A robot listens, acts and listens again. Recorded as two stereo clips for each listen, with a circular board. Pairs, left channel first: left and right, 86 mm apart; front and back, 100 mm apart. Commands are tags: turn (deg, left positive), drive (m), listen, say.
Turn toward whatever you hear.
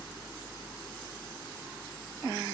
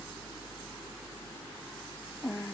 <listen/>
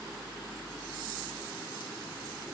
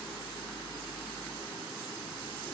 <listen/>
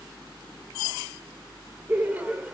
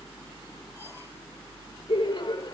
<turn deg="-20"/>
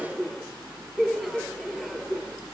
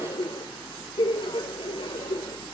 <say>Facing the laughter.</say>